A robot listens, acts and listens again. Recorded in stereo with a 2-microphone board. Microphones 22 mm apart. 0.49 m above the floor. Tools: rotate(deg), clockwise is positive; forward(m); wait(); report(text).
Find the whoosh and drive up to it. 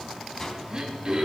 rotate(-25)
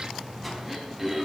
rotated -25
forward(1.0)
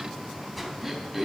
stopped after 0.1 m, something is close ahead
report("Blocked. The whoosh is further on, straight ahead.")